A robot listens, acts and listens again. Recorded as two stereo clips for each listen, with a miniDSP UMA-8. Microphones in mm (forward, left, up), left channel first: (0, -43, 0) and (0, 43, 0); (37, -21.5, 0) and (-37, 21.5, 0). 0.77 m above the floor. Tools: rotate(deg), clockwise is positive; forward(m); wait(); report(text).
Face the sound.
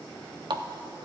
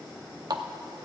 rotate(-115)
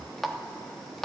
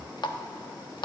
report("Found it: a running tap, straight ahead, under 1 m away.")